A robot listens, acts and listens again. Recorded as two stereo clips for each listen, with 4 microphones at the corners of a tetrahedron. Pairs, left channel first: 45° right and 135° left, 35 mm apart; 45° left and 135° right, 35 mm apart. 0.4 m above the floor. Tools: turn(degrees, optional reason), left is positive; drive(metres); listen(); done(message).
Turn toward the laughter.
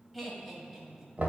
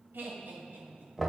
turn(degrees=-130, reason="The laughter: 130° right.")
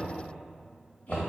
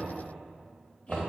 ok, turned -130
listen()
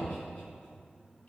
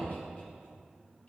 listen()
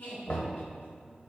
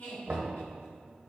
done("Facing the laughter, 2 to 4 m away.")